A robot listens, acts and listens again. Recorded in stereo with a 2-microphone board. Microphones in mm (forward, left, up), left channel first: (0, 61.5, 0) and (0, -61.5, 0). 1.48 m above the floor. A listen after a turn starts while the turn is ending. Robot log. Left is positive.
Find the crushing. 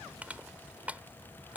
cmd yaw -30
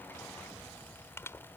note: So it is at 20° left.
cmd yaw +20
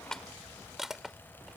end: Facing the crushing.